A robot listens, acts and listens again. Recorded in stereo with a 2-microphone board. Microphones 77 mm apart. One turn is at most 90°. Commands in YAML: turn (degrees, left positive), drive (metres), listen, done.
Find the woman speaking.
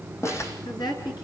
turn: 75
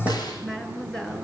done: "Found it: a woman speaking, straight ahead."